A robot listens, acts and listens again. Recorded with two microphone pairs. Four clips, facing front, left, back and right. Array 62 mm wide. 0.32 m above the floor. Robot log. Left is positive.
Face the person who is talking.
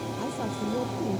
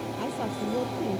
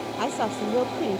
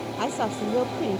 note: The woman speaking: 130° right.
cmd yaw -130
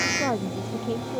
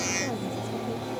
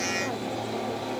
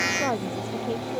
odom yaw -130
note: The woman speaking is now 60° right.
cmd yaw -60
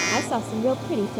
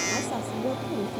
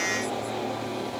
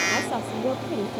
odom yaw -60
note: The woman speaking is now 25° right.
cmd yaw -25
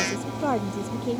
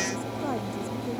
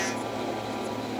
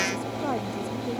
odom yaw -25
note: The woman speaking is now 15° right.
cmd yaw -15
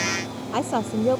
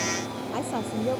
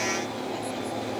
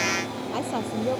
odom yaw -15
end: Facing the woman speaking.